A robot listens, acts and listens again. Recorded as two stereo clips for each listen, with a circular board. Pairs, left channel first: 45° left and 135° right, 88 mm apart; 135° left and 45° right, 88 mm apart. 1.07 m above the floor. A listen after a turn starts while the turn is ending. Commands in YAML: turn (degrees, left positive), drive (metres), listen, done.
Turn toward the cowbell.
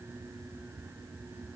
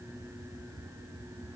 listen: true
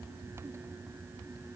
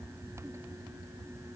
listen: true
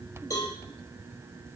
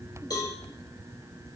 turn: 95
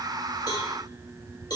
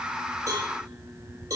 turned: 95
done: "Found it: a cowbell, straight ahead."